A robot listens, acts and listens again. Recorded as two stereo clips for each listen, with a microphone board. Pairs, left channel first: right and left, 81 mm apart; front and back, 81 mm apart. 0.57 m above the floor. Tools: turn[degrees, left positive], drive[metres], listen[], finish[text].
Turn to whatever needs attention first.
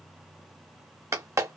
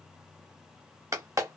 Action: listen[]
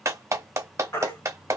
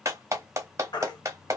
Thought: The baby crying: 35° right.
Action: turn[-35]
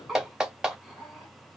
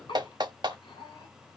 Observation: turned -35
Action: listen[]
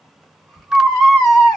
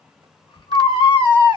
Action: finish[Found it: a baby crying, straight ahead, 1 to 2 m away.]